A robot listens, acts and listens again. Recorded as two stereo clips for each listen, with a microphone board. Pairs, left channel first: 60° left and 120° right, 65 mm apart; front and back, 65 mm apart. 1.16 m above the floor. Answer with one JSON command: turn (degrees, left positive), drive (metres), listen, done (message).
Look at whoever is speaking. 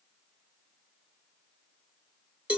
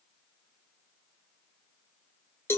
{"listen": true}
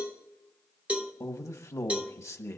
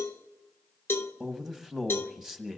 {"turn": 100}
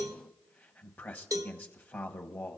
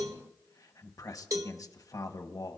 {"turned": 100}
{"done": "Facing the man speaking, 1 to 2 m away."}